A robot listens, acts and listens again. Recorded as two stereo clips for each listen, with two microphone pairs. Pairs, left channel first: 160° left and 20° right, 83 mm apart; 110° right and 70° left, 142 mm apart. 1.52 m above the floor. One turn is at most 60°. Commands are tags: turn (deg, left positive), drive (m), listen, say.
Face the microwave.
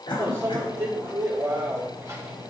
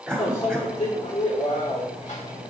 <turn deg="-60"/>
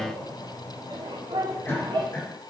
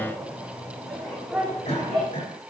<turn deg="-20"/>
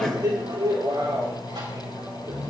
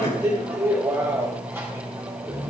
<say>Found it: a microwave, straight ahead, 2 to 4 m away.</say>